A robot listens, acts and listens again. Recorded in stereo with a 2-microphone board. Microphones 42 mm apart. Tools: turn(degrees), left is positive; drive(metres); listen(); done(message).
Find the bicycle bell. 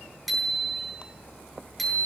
turn(degrees=30)
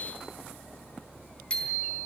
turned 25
turn(degrees=150)
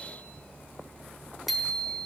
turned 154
done("Facing the bicycle bell, over 4 m away.")